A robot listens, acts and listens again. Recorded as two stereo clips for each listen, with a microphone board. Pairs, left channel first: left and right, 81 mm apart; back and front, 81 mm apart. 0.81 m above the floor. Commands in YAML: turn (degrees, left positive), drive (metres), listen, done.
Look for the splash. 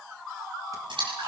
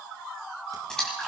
turn: -95
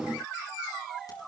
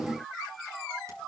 done: "Facing where the splash came from. I can't hear it now."